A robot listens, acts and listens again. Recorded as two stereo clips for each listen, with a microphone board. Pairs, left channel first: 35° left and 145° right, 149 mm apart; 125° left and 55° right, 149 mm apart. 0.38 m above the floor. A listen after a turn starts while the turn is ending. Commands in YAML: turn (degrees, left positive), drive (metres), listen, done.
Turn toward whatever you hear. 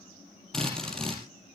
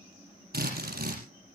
turn: -50
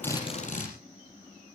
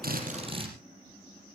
done: "Facing the drill."